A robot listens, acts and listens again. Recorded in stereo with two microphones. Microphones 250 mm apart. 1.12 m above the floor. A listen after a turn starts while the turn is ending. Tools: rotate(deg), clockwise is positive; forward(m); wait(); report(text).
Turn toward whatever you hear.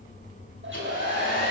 rotate(50)
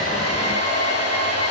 rotate(80)
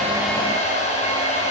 rotate(-25)
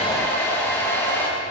rotate(-10)
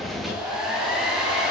report("Facing the hair dryer, over 4 m away.")